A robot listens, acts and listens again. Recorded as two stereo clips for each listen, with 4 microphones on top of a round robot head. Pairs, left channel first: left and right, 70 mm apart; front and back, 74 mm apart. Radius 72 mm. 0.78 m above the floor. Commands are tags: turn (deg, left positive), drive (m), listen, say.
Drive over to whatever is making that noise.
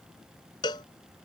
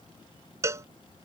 <turn deg="130"/>
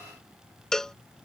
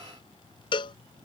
<turn deg="10"/>
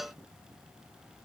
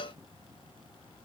<drive m="1.0"/>
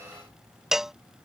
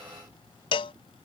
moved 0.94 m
<drive m="1.0"/>
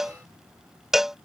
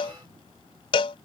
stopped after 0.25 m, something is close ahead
<say>I am next to the cowbell.</say>